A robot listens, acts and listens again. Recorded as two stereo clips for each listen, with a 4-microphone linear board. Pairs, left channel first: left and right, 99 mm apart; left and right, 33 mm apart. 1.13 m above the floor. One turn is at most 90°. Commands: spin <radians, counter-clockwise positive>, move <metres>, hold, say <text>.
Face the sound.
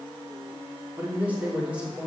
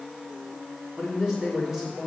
spin -0.52
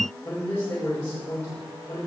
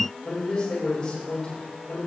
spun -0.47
spin 0.52
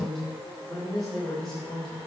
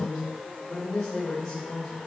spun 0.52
say Found it: a man speaking, straight ahead, over 4 m away.